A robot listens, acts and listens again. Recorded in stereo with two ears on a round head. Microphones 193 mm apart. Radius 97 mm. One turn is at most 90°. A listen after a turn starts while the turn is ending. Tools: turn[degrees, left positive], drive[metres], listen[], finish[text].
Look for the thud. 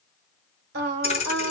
Thought: The thud: about 30° left or 150° left.
Action: turn[30]
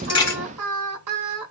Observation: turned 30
Action: listen[]
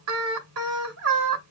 Action: finish[I heard a thud, but can't make it out now. It was about straight ahead or 120° left.]